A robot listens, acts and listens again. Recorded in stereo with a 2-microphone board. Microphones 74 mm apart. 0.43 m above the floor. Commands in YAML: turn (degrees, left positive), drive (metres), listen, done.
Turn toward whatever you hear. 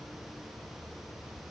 listen: true
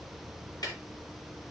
turn: 60
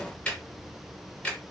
turn: 20
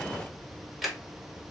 done: "Facing the ticking, 1 to 2 m away."